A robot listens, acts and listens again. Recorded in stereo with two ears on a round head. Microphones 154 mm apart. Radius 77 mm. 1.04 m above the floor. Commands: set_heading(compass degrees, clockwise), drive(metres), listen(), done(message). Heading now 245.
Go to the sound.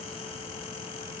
listen()
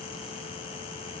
listen()
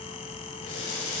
set_heading(175)
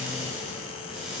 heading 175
drive(1.0)
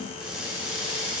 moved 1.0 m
drive(1.0)
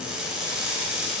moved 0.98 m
drive(1.0)
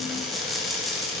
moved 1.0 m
drive(1.0)
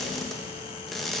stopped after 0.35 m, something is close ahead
done("I am next to the crushing.")